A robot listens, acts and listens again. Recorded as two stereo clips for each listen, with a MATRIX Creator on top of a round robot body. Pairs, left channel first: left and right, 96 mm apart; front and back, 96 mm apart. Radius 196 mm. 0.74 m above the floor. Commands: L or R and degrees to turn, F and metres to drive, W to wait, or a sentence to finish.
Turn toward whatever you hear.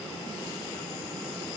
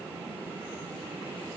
W
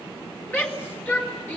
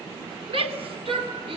L160
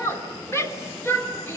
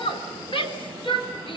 L30
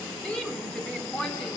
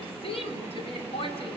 L10
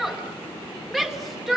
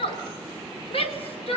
Facing the shout.